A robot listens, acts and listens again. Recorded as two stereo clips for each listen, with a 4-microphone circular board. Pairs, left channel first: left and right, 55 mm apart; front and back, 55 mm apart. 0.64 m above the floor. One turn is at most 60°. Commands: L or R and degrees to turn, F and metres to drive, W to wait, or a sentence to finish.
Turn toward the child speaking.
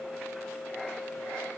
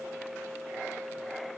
W
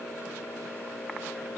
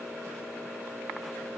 W
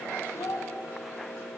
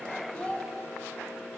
L60
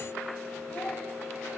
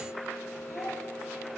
L10
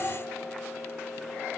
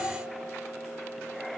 L20
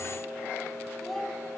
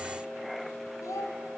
Found it: a child speaking, straight ahead.